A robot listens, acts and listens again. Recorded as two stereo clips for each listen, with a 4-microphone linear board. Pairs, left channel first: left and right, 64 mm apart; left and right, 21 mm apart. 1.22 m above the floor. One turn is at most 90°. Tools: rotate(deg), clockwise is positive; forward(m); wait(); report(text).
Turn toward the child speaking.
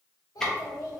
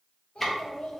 rotate(-75)
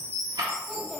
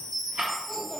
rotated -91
report("Found it: a child speaking, straight ahead.")